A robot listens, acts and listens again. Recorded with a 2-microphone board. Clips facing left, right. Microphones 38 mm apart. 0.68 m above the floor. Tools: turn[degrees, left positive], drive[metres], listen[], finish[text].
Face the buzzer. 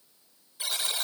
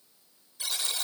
Thought: The buzzer: about 20° left or 160° left.
Action: turn[20]
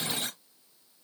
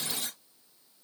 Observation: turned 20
Thought: So it is at 140° left.
Action: turn[140]
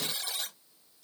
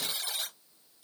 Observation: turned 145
Action: finish[Facing the buzzer.]